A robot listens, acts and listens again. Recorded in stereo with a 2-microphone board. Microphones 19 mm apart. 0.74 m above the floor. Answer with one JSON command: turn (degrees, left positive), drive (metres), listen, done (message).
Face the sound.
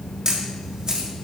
{"turn": -35}
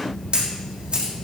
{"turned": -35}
{"turn": -100}
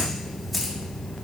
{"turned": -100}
{"done": "Facing the camera shutter."}